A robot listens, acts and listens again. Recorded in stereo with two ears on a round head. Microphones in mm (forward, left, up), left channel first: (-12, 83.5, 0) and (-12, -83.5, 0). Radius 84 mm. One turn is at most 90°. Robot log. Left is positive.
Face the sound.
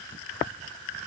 cmd idle
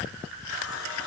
note: The running tap: about 70° left or 110° left.
cmd yaw +70
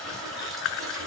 end: Facing the running tap.